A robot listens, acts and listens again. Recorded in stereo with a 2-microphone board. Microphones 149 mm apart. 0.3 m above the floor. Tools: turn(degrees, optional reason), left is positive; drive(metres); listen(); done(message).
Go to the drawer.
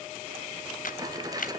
turn(degrees=-25, reason="The drawer: about 25° right or 155° right.")
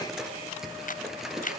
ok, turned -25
drive(metres=1.0)
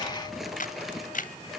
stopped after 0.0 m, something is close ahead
done("Something is in my way. I am facing the drawer but have not reached it.")